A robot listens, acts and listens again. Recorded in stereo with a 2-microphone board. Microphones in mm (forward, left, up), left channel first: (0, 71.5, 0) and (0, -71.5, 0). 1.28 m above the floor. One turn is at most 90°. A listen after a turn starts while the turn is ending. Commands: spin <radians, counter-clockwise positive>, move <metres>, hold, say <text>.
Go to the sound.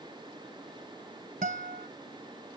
spin -1.22
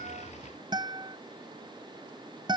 spin -0.61
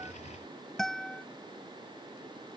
move 1.0
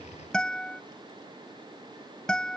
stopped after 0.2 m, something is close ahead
say Blocked. The guitar is further on, straight ahead.